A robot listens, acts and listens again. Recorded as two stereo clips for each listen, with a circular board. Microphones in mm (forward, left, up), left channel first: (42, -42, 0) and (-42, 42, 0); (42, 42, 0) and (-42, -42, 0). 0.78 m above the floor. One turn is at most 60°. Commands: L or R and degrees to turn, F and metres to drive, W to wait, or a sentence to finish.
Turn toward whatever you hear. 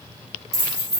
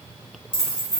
L60
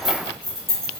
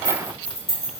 L40
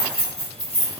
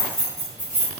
R20
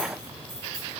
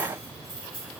W
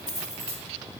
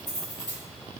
Facing the keys jangling.